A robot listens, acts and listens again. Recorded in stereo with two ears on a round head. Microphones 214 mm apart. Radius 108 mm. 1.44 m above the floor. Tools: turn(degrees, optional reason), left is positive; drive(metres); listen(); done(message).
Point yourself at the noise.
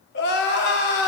turn(degrees=45, reason="The crying: about 45° left or 135° left.")
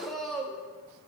done("Facing the crying, under 1 m away.")